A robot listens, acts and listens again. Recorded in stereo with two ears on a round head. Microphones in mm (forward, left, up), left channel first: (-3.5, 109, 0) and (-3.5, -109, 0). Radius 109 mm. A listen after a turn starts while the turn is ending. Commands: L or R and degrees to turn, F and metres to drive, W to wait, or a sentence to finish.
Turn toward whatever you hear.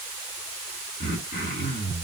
L30
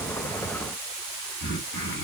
L115
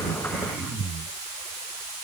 Found it: throat clearing, straight ahead, 2 to 4 m away.